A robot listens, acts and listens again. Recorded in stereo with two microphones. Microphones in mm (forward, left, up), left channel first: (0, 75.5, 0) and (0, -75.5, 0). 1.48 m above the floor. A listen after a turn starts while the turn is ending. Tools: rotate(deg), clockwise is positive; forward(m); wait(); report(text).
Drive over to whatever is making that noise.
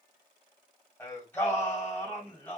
rotate(-30)
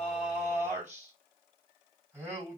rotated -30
rotate(15)
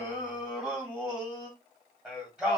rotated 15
rotate(10)
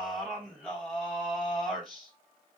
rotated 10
forward(1.0)
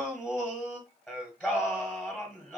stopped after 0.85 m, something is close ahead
report("Arrived at the singing, straight ahead.")